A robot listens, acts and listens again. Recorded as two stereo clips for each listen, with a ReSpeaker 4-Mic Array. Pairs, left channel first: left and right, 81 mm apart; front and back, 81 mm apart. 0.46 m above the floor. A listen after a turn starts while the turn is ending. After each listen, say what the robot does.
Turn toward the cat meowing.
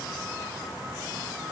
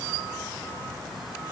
Keep listening.
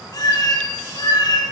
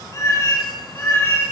Turn 60° left.
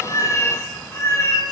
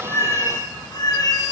Turn 40° left.
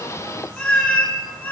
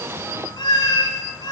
Turn 25° left.
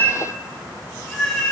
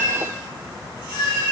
Turn 15° left.
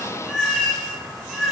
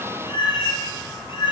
Found it: a cat meowing, straight ahead.